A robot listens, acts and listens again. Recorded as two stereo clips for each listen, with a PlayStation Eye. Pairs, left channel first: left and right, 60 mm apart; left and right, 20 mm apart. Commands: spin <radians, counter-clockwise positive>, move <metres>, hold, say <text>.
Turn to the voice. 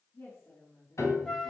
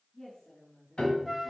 spin 0.61
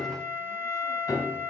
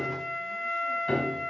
hold
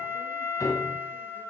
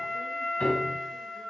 hold
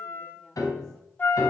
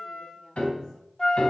say I heard a woman speaking, but can't make it out now. It was about straight ahead or 110° left.